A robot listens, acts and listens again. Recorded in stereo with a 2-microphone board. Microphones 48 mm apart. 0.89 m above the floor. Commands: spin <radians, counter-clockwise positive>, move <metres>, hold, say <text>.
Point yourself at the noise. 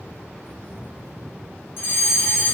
spin 1.05
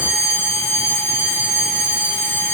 spin 1.05
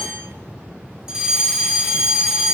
spin -0.26
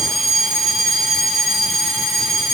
say Facing the fire alarm.